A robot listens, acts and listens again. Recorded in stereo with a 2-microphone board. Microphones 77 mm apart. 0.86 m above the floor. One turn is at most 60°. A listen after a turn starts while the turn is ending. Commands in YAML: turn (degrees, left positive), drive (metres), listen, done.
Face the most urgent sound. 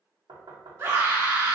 turn: -35
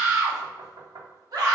turn: -60
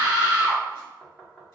turn: -50
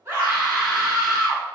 done: "Found it: a scream, straight ahead, 1 to 2 m away."